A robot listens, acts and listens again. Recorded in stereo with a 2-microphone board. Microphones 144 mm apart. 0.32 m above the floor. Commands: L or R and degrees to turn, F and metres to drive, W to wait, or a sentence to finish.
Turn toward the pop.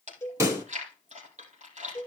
R20
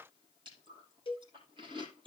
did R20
W
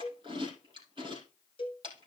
I heard a pop, but can't make it out now. It was about straight ahead or 140° right.